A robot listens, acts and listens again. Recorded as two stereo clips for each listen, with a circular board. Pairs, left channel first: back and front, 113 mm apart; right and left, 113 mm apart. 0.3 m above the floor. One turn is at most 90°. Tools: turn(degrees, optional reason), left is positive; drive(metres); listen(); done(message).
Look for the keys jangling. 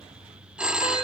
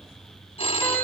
listen()
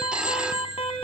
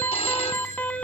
listen()
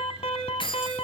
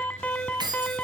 turn(degrees=90, reason="The keys jangling: 140° left.")
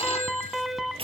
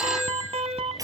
turn(degrees=50, reason="Nothing new. It was at 50° left.")
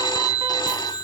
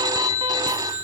listen()
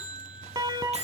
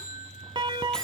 done("I heard keys jangling from this way, but can't make it out now.")